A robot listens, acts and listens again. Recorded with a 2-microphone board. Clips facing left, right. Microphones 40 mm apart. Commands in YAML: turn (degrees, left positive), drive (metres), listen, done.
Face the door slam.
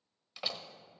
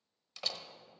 turn: 30
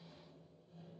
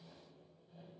listen: true
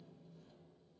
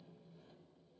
done: "I heard a door slam, but can't make it out now. It was about 20° right or 140° left."